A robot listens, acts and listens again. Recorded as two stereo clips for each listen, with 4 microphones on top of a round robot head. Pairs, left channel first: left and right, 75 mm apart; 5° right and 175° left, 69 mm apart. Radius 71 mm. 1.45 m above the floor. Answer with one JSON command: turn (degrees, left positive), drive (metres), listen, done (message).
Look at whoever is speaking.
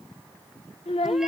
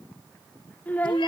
{"turn": 60}
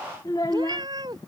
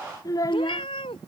{"turn": 30}
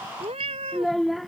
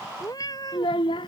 {"done": "Facing the child speaking."}